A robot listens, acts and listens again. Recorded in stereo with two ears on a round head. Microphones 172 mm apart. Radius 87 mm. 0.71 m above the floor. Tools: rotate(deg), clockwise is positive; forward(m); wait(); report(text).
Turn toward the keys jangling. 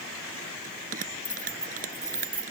rotate(30)
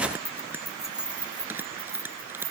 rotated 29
rotate(20)
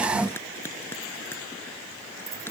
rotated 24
wait()
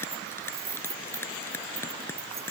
rotate(30)
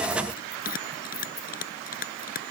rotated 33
rotate(-20)
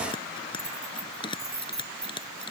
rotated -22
report("Facing the keys jangling.")